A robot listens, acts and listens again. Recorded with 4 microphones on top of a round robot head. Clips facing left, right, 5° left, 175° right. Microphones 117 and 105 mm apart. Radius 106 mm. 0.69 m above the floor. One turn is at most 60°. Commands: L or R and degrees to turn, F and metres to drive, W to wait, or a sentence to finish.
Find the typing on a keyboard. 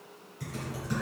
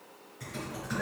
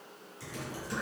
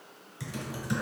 L60
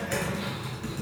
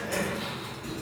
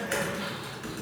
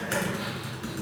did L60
L60
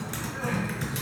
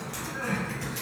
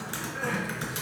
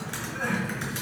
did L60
L60
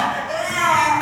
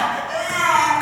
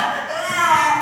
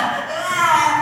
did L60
L20
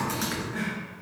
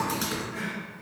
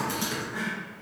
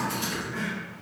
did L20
R20
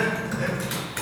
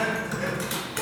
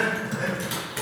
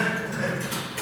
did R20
Facing the typing on a keyboard, 1 to 2 m away.